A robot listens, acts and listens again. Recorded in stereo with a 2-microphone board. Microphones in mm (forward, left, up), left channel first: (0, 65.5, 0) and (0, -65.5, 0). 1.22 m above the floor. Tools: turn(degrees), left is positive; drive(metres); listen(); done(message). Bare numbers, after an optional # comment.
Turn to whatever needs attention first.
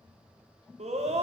# The scream: about 55° right or 125° right.
turn(-55)
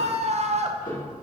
# So it is at 65° right.
turn(-65)
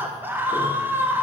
# The scream is now 15° right.
turn(-15)
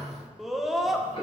done("Facing the scream, under 1 m away.")